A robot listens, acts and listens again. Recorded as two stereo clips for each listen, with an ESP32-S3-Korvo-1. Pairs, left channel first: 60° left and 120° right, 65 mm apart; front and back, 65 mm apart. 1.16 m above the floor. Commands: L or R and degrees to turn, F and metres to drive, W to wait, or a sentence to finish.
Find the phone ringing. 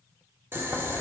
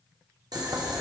W
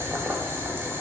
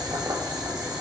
W
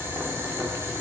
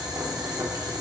I can't make out a phone ringing, only boiling.